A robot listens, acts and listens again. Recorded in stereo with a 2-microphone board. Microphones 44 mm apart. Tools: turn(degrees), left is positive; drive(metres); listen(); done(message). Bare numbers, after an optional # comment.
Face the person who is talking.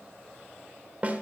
listen()
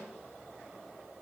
listen()
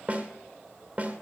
done("I can't make out anyone speaking to turn to.")